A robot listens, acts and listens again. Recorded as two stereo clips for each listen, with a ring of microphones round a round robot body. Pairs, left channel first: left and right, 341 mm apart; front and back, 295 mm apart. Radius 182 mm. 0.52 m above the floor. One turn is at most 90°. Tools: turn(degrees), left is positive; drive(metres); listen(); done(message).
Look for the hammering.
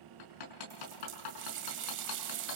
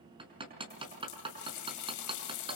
turn(degrees=90)
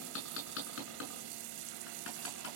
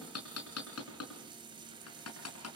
turn(degrees=35)
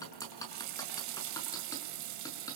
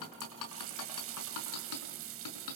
turn(degrees=10)
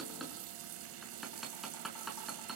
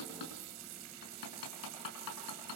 done("Found it: hammering, straight ahead.")